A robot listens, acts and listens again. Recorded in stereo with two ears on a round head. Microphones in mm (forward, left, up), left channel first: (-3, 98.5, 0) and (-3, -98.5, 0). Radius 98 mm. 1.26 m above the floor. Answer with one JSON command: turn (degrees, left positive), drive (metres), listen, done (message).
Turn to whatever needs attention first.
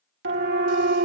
{"turn": -55}
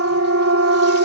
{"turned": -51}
{"turn": -70}
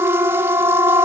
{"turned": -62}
{"turn": -10}
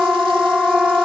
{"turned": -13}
{"done": "Found it: a siren, straight ahead."}